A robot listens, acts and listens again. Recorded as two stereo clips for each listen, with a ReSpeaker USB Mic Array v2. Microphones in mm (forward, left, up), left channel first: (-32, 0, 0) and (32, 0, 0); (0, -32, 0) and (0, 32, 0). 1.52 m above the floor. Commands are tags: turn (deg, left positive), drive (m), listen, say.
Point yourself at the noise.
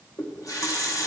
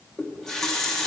<turn deg="-170"/>
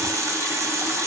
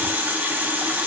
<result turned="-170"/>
<turn deg="30"/>
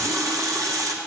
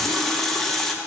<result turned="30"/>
<turn deg="-10"/>
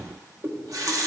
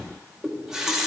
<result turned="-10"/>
<say>Facing the running tap, under 1 m away.</say>